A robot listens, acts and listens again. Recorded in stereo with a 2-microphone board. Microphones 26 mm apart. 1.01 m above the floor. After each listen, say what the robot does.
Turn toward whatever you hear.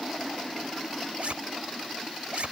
Turn 60° right.
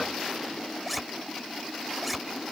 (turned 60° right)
Found it: a zipper, straight ahead.